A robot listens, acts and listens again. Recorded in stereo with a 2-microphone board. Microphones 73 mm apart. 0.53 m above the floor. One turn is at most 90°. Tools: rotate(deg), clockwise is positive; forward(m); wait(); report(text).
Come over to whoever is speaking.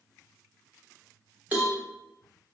wait()
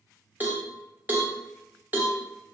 wait()
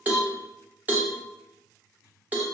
report("I can't make out anyone speaking, only a cowbell.")